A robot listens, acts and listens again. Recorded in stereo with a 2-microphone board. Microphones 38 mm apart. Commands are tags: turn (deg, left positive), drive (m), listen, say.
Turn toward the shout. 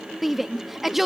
<turn deg="-30"/>
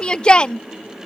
<turn deg="30"/>
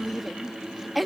<say>Found it: a shout, straight ahead.</say>